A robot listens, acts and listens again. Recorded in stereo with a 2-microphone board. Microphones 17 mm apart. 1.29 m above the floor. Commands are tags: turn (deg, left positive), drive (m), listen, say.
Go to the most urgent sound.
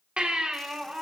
<turn deg="-90"/>
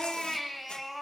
<drive m="1.0"/>
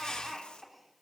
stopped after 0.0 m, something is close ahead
<say>Blocked. The baby crying is further on, straight ahead.</say>